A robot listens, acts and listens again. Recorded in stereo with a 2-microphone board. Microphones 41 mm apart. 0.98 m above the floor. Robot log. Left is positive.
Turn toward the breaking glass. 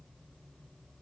cmd idle
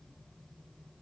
cmd idle
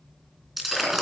cmd yaw -30
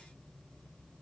cmd idle
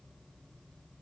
end: I heard breaking glass, but can't make it out now. It was about 25° left or 145° right.